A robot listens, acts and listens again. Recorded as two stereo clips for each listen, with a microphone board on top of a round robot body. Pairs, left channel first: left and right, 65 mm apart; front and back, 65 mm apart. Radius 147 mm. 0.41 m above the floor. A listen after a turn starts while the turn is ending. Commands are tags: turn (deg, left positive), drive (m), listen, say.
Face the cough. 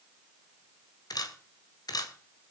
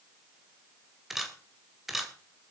<listen/>
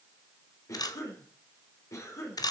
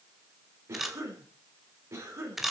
<turn deg="130"/>
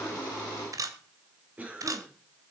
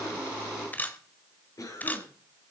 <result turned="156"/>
<turn deg="-25"/>
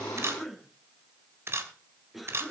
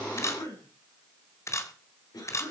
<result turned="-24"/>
<say>Facing the cough.</say>